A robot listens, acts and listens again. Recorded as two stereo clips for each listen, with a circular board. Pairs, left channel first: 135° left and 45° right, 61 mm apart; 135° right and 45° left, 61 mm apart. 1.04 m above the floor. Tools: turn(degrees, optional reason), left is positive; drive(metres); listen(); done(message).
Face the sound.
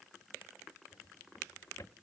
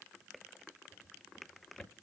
turn(degrees=145, reason="The drawer: 145° left.")
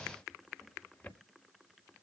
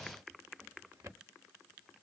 turn(degrees=70, reason="The drawer is now 70° left.")
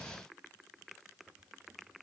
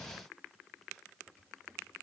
listen()
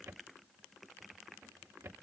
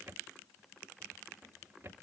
done("Facing the drawer, 1 to 2 m away.")